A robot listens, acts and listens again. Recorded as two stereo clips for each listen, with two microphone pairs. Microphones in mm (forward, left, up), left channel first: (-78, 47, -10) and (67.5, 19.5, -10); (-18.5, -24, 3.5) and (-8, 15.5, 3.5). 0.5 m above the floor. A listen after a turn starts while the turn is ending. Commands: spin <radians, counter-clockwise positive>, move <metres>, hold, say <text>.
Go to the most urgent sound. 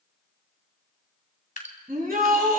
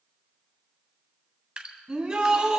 spin 0.17
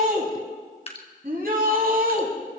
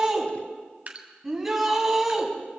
move 1.0
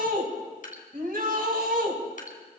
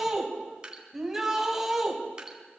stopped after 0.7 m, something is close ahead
say Blocked. The shout is further on, straight ahead.